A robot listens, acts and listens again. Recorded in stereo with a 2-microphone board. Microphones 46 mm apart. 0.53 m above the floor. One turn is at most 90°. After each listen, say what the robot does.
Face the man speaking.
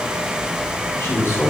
Turn 90° left.
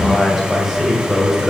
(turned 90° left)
Turn 10° right.
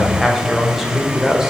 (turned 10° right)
Turn 10° right.
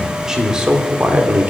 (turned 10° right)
Turn 35° right.
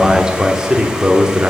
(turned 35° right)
Turn 15° right.
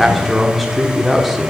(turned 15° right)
Facing the man speaking.